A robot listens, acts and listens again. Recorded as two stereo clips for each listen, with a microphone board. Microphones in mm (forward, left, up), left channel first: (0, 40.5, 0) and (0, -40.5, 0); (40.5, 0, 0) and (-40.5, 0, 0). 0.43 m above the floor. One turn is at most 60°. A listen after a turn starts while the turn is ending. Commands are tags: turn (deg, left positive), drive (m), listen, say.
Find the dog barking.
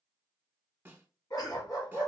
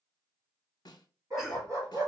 <turn deg="60"/>
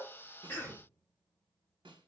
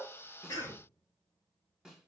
<turn deg="60"/>
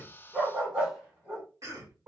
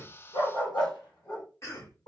<turn deg="-25"/>
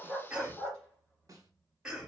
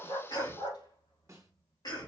<turn deg="10"/>
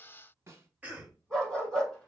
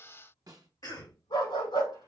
<say>Found it: a dog barking, straight ahead, over 4 m away.</say>